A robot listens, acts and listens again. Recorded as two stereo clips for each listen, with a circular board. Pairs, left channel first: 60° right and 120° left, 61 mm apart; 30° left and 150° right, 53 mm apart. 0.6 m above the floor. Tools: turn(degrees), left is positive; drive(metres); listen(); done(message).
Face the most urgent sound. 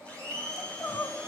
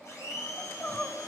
turn(degrees=-20)
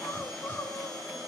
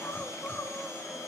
turn(degrees=-10)
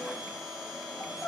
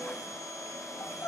done("Facing the crying, 1 to 2 m away.")